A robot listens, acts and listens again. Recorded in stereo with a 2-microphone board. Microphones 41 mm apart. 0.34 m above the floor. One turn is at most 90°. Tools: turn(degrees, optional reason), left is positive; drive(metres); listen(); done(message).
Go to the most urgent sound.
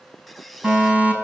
turn(degrees=-35, reason="The fire alarm: about 35° right or 145° right.")
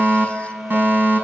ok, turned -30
turn(degrees=-90, reason="So it is at 110° right.")
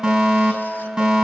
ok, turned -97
turn(degrees=-15, reason="The fire alarm is now 15° right.")
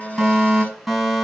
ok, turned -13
drive(metres=1.0)
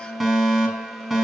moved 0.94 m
drive(metres=1.0)
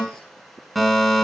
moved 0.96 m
drive(metres=1.0)
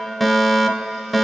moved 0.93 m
drive(metres=1.0)
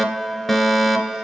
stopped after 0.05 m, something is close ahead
turn(degrees=10, reason="The fire alarm is now 10° left.")
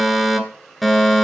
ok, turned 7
done("I am next to the fire alarm.")